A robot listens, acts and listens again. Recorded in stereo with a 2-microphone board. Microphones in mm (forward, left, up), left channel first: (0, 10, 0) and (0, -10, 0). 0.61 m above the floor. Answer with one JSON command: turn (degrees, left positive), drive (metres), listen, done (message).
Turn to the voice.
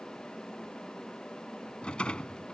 {"listen": true}
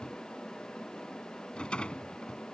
{"listen": true}
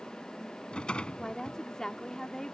{"turn": 30}
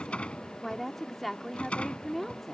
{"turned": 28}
{"done": "Found it: a woman speaking, straight ahead."}